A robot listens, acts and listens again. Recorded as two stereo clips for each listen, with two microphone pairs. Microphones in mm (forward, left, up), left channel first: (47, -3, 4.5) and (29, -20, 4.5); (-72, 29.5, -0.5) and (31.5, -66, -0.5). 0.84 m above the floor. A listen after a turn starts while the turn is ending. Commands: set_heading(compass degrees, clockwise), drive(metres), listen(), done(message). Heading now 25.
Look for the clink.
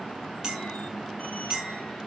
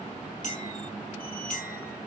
set_heading(220)
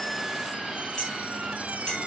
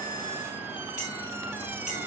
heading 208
set_heading(223)
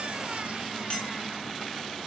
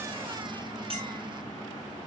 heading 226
done("Facing the clink.")